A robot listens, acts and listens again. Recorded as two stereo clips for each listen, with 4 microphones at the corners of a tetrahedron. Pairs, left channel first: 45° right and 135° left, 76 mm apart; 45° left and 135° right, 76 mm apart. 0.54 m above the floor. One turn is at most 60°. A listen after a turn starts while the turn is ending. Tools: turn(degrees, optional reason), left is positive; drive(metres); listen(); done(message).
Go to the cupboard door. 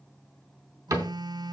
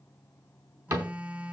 turn(degrees=-60, reason="The cupboard door: 175° right.")
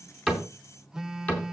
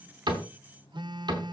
turn(degrees=-60, reason="The cupboard door is now 115° right.")
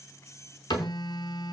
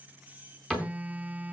turn(degrees=-35, reason="The cupboard door is now 35° right.")
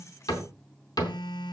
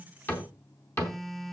turn(degrees=-10, reason="The cupboard door is now 10° right.")
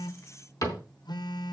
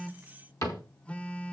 drive(metres=1.0)
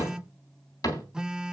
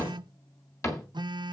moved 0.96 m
drive(metres=1.0)
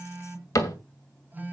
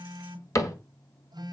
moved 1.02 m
drive(metres=1.0)
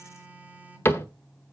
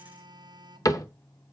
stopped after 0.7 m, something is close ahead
turn(degrees=10, reason="The cupboard door is now 10° left.")
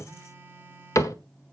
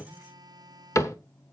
done("Arrived at the cupboard door, straight ahead.")